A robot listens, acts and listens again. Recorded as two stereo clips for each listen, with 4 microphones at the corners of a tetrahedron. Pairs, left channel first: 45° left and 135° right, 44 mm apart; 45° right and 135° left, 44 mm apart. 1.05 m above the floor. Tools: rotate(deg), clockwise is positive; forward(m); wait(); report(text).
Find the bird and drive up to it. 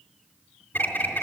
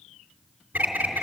rotate(-85)
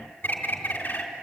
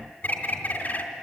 forward(1.0)
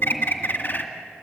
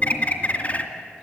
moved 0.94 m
forward(1.0)
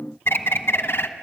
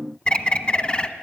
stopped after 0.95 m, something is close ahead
rotate(-15)
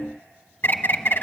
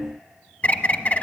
report("I am next to the bird.")